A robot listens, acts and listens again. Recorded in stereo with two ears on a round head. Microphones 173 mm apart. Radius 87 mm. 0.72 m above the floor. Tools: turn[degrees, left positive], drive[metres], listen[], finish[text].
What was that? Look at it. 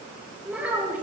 Action: turn[-30]
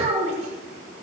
Thought: So it is at 140° right.
Action: turn[-140]
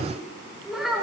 Action: finish[Facing the child speaking.]